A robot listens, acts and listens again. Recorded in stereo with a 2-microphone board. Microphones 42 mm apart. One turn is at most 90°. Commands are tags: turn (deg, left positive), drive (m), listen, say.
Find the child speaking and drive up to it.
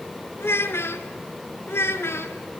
<turn deg="75"/>
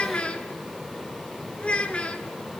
<turn deg="25"/>
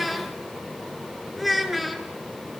<drive m="1.0"/>
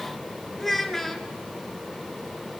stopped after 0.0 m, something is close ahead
<say>Blocked. The child speaking is further on, straight ahead.</say>